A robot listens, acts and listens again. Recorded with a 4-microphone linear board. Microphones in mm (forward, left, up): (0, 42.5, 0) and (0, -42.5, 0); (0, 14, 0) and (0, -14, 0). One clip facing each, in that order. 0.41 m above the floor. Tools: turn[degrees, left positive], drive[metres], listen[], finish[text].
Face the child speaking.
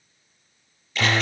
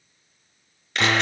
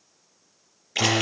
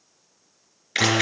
Action: listen[]
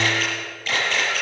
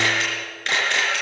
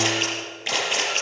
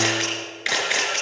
Action: listen[]
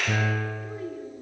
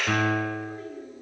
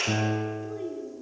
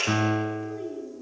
Action: turn[30]
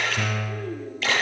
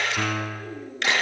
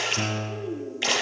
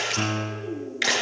Thought: So it is at 40° right.
Action: turn[-40]
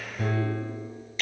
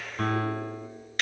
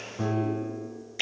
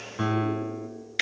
Action: listen[]
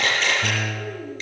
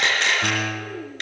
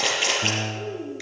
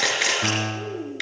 Thought: The child speaking is now 15° right.
Action: turn[-15]
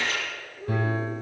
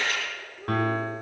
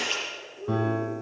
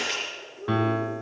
Action: finish[Found it: a child speaking, straight ahead, 2 to 4 m away.]